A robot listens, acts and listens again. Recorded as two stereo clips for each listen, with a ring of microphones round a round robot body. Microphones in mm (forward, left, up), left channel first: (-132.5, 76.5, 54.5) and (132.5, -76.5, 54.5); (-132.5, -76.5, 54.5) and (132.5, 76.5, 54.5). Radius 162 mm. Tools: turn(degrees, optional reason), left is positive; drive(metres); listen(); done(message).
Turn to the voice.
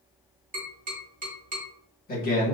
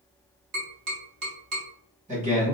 turn(degrees=95, reason="The man speaking: 95° left.")
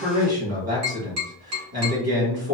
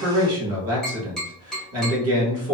done("Found it: a man speaking, straight ahead.")